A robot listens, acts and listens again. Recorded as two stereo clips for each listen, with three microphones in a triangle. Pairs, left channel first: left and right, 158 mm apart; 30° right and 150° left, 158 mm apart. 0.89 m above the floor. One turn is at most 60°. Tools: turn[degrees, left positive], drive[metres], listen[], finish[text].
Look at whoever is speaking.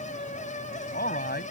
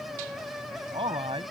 Thought: The man speaking: 95° left.
Action: turn[60]
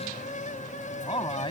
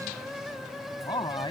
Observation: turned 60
Thought: The man speaking is now 30° left.
Action: turn[30]
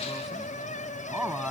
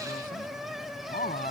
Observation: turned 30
Action: finish[Found it: a man speaking, straight ahead.]